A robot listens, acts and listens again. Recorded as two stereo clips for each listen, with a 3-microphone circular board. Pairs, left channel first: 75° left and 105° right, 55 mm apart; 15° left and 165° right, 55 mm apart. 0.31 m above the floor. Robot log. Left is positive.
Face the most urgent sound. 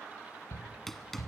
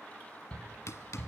note: The shout: 80° left.
cmd yaw +80
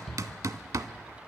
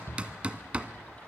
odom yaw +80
note: The shout is now 10° right.
cmd yaw -10
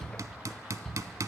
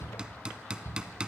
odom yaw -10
end: Facing the shout.